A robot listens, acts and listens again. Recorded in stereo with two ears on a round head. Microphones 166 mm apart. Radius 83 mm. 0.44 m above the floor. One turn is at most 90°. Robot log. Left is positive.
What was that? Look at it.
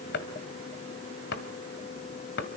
note: The chopping: about 65° left or 115° left.
cmd yaw +65
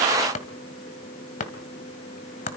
note: So it is at 45° left.
cmd yaw +45
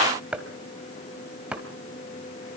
end: Found it: chopping, straight ahead, 1 to 2 m away.